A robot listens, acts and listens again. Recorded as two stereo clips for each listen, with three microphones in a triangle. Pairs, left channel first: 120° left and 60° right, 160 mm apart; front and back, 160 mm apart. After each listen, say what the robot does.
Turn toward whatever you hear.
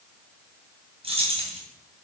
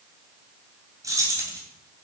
Turn 110° right.
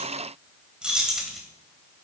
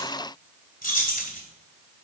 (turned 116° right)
Turn 30° left.
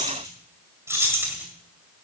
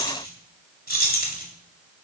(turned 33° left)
Turn 15° left.
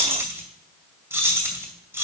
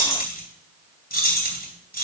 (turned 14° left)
Turn 15° left.
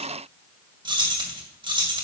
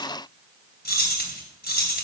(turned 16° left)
Found it: keys jangling, straight ahead, 2 to 4 m away.